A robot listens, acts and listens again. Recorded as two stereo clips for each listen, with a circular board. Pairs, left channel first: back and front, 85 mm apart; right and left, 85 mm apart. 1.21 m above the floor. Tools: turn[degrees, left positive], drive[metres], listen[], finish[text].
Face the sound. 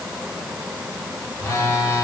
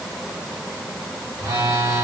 Thought: The phone buzzing: 130° left.
Action: turn[130]
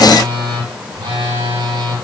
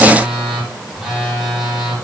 Action: finish[Facing the phone buzzing.]